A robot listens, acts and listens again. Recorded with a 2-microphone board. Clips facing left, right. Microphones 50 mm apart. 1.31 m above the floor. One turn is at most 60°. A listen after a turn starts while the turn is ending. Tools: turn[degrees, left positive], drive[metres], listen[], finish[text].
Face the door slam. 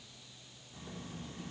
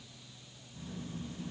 Action: listen[]
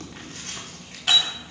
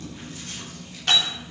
Action: turn[30]
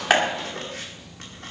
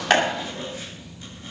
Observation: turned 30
Action: listen[]
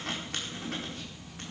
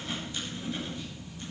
Action: finish[I heard a door slam, but can't make it out now. It was about 25° right or 145° left.]